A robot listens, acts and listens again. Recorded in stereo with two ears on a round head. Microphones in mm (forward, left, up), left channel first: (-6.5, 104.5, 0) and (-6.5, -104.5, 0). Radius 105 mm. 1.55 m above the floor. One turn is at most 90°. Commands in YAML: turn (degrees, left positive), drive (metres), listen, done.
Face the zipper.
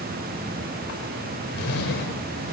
turn: 45
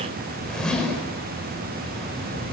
done: "Found it: a zipper, straight ahead, over 4 m away."